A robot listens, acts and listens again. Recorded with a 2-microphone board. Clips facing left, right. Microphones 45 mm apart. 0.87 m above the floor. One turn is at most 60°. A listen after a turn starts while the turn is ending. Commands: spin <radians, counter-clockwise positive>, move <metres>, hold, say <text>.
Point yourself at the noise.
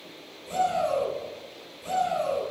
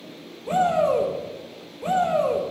spin -0.79
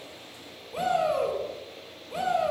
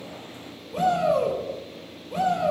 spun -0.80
say Found it: a shout, straight ahead, over 4 m away.